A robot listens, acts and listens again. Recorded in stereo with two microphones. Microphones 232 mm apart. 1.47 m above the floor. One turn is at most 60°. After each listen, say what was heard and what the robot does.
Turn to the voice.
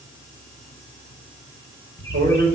Turn 60° right.
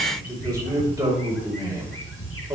So it is at 15° right. Turn 15° right.
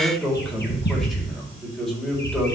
Found it: a man speaking, straight ahead.